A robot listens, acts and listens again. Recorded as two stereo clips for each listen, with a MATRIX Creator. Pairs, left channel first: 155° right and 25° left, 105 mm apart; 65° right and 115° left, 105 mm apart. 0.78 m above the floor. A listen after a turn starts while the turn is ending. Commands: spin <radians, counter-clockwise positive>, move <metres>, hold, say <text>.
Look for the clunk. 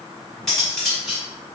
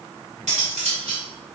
hold
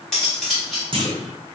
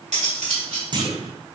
spin 1.05
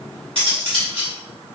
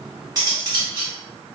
say I heard a clunk from this way, but can't make it out now.